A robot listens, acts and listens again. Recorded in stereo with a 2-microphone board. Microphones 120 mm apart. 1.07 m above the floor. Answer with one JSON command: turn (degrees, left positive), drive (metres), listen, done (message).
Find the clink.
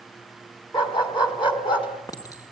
{"turn": 30}
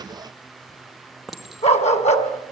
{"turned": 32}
{"done": "Facing the clink."}